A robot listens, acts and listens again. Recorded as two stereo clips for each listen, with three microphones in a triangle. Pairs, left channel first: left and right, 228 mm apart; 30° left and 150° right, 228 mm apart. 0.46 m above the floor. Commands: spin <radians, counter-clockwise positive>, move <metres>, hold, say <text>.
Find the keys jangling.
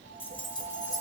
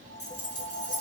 spin 0.26
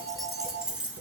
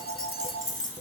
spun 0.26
say Found it: keys jangling, straight ahead, 2 to 4 m away.